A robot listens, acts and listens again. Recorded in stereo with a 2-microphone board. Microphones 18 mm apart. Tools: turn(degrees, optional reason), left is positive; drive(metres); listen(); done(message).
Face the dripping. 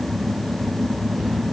listen()
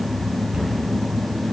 listen()
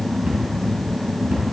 done("I can't make out dripping, only a cupboard door.")